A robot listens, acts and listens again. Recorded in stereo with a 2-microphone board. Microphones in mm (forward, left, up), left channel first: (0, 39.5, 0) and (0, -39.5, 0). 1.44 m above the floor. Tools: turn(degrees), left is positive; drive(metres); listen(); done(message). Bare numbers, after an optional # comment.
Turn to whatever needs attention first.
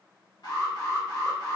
# The alarm: about 60° left or 120° left.
turn(60)
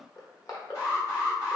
# So it is at 50° left.
turn(50)
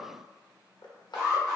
# The alarm is now 10° right.
turn(-10)
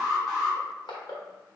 done("Found it: an alarm, straight ahead, 2 to 4 m away.")